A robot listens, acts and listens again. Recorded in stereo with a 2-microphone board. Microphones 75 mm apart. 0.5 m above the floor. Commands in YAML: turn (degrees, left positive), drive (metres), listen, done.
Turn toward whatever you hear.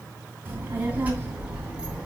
turn: -30
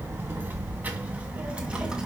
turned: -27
turn: -30
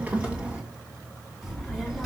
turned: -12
turn: 30
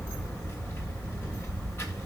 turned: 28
turn: 145
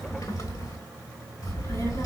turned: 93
turn: 55
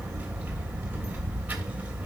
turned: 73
turn: -20
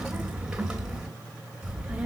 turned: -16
done: "Facing the child speaking."